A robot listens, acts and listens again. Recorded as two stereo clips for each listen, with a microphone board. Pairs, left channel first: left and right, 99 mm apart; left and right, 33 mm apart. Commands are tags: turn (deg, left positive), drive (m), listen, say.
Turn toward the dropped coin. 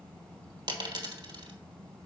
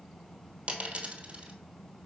<turn deg="-50"/>
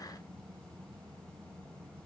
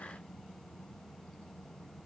<listen/>
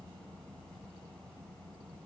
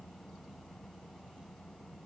<say>I heard a dropped coin, but can't make it out now. It was about straight ahead or 80° right.</say>